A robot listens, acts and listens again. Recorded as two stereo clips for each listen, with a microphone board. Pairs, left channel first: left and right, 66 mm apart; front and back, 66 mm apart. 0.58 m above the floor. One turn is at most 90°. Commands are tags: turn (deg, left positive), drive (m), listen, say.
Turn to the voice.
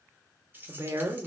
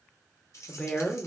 <turn deg="-70"/>
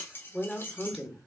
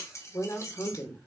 <say>Found it: a woman speaking, straight ahead.</say>